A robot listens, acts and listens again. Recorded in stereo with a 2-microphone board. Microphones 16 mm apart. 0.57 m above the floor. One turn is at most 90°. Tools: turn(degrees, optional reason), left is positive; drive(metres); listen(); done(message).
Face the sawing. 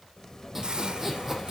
turn(degrees=-25, reason="The sawing: about 25° right or 155° right.")
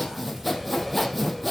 done("Found it: sawing, straight ahead.")